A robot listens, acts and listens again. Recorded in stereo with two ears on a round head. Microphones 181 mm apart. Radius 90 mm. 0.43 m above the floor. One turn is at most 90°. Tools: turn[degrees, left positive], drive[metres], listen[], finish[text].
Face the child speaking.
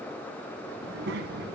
Thought: The child speaking: about 55° right or 125° right.
Action: turn[-55]
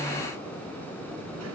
Action: listen[]
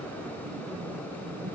Thought: So it is at 80° right.
Action: turn[-80]
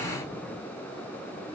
Action: listen[]
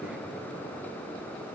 Action: finish[Found it: a child speaking, straight ahead.]